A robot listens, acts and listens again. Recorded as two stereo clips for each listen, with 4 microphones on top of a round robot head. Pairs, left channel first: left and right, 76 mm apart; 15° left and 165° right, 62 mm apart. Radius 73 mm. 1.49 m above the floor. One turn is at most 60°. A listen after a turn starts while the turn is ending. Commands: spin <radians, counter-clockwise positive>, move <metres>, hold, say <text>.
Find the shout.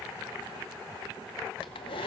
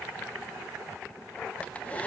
hold
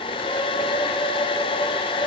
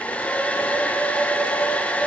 hold
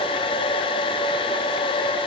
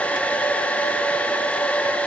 say I can't make out a shout to turn to.